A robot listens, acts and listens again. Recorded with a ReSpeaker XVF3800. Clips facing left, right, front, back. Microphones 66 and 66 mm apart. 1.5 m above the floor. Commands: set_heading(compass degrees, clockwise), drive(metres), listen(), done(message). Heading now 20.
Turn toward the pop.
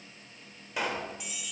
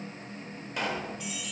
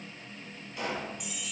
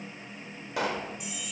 set_heading(205)
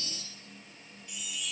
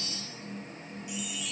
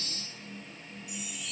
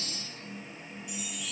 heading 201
done("I heard a pop from this way, but can't make it out now.")